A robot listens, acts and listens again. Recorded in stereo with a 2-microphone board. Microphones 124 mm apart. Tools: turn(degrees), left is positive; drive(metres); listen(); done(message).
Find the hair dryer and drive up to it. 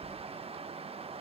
listen()
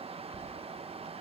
listen()
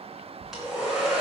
turn(degrees=-30)
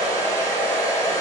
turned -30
turn(degrees=25)
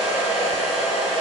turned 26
drive(metres=1.0)
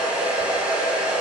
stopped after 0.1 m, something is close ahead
turn(degrees=-10)
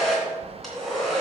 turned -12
done("Something is in my way. I am facing the hair dryer but have not reached it.")